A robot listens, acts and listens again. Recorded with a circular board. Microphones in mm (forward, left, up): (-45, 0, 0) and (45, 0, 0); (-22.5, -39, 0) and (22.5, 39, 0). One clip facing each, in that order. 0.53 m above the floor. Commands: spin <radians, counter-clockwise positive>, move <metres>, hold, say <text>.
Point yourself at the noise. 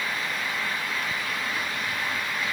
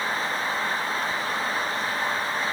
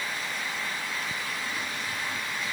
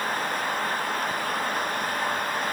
hold
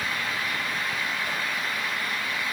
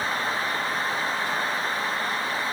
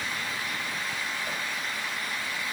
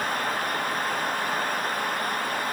hold
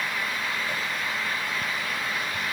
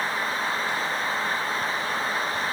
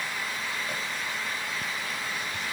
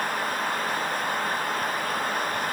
say I can't make out anything.